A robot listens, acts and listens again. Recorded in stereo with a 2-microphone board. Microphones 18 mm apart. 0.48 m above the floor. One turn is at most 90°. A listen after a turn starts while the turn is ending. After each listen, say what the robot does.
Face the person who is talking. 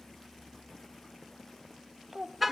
Turn 30° right.
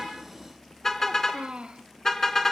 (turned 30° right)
Turn 90° right.
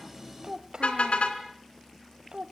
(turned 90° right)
Turn 55° right.
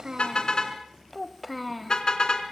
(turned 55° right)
Facing the child speaking.